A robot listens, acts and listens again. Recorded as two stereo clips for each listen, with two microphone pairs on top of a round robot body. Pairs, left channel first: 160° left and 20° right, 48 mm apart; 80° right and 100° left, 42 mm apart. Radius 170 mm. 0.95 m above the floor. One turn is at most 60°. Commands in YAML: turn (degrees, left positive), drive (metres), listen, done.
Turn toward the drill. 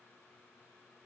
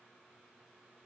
listen: true
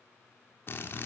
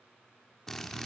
turn: -60
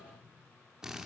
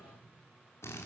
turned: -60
turn: -60
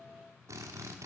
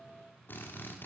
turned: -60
turn: -35
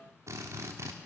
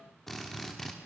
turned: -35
done: "Facing the drill."